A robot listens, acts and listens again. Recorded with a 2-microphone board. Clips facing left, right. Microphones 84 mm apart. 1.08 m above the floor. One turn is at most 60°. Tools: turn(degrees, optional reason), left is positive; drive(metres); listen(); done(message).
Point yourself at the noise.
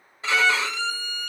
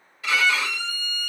turn(degrees=30, reason="The violin: about 30° left or 150° left.")
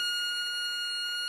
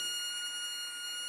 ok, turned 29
turn(degrees=60, reason="So it is at 120° left.")
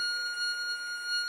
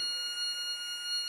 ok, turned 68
turn(degrees=55, reason="The violin is now 55° left.")
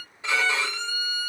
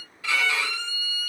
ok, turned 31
turn(degrees=25, reason="The violin is now 25° left.")
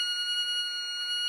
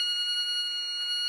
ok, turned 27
done("Facing the violin, 1 to 2 m away.")